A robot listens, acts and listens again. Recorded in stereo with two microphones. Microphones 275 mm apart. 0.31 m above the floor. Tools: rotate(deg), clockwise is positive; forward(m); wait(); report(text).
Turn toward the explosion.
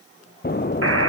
rotate(-35)
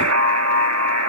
wait()
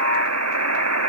report("I heard an explosion, but can't make it out now. It was about straight ahead or 110° left.")